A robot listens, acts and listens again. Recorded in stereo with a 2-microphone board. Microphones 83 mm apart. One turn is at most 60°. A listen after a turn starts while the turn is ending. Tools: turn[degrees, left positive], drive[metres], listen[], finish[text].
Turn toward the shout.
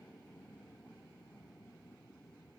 Action: listen[]
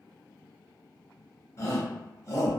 Thought: The shout: about 35° left or 145° left.
Action: turn[35]
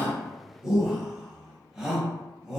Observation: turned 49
Thought: So it is at 10° right.
Action: turn[-10]
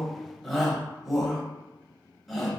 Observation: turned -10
Action: finish[Facing the shout, under 1 m away.]